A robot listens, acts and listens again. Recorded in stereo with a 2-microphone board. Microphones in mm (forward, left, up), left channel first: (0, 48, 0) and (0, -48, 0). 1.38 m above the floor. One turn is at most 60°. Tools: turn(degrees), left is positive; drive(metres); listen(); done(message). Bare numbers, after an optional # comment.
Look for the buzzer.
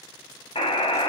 turn(60)
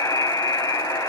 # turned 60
# So it is at 40° left.
turn(40)
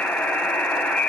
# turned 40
# The buzzer is now 15° left.
turn(15)
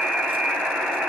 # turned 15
done("Facing the buzzer, 1 to 2 m away.")